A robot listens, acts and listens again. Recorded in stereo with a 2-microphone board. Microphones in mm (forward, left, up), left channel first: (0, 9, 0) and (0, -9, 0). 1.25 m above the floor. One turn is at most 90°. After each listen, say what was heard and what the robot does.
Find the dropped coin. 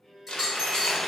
Turn 30° left.
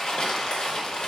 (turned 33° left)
Keep listening.
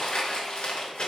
I heard a dropped coin, but can't make it out now. It was about 30° right or 145° left.